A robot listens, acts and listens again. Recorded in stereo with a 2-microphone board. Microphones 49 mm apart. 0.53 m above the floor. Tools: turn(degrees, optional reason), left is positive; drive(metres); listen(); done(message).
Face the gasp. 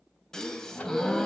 turn(degrees=30)
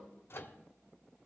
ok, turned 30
listen()
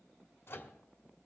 done("I heard a gasp, but can't make it out now. It was about 20° right or 140° left.")